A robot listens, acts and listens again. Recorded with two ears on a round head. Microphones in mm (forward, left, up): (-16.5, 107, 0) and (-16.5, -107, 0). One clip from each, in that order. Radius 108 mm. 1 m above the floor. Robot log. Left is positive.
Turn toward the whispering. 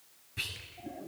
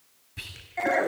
cmd yaw -30
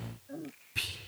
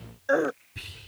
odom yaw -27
note: So it is at 25° left.
cmd yaw +25
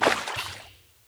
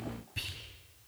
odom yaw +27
end: Facing the whispering, over 4 m away.